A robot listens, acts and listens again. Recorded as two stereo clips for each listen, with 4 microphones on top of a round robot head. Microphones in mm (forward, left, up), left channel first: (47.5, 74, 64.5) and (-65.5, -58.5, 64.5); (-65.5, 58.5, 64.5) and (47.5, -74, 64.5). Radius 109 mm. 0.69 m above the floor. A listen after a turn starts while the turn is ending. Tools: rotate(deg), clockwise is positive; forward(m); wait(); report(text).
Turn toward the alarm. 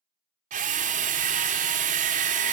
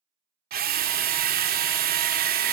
wait()
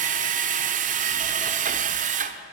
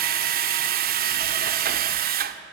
wait()
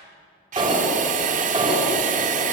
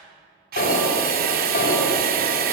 rotate(-165)
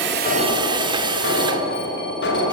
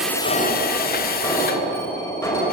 rotate(-55)
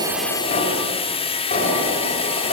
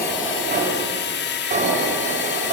report("Facing the alarm, over 4 m away.")